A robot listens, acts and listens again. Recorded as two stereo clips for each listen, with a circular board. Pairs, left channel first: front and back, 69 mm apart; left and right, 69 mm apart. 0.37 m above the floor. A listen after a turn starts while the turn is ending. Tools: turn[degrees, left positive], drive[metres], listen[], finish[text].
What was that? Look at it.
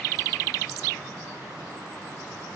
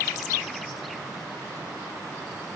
Action: listen[]
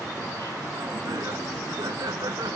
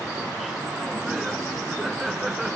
Thought: The laughter: 175° right.
Action: turn[-175]
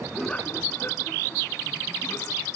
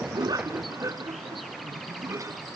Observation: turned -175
Thought: The laughter is now 50° right.
Action: turn[-50]
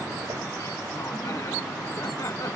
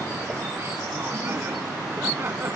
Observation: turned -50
Thought: The laughter is now 35° right.
Action: turn[-35]
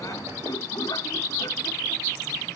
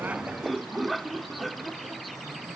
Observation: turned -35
Action: finish[Facing the laughter.]